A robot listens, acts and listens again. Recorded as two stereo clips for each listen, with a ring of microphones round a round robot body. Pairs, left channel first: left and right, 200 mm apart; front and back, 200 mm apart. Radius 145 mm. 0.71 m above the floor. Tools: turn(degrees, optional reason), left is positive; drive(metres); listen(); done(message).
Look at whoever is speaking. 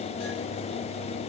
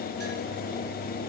listen()
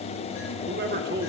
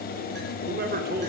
turn(degrees=-135, reason="The man speaking: 135° right.")
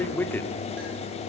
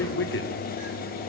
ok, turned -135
turn(degrees=10, reason="The man speaking is now 10° left.")
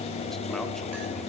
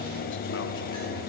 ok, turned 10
listen()
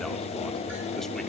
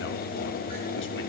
listen()
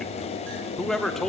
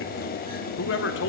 done("Found it: a man speaking, straight ahead, 2 to 4 m away.")